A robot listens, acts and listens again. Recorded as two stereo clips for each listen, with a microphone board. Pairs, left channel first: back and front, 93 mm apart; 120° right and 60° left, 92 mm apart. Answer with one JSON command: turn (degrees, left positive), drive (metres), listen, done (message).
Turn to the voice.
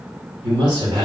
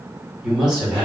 {"turn": -20}
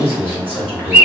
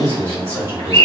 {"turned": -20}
{"done": "Found it: a man speaking, straight ahead, 1 to 2 m away."}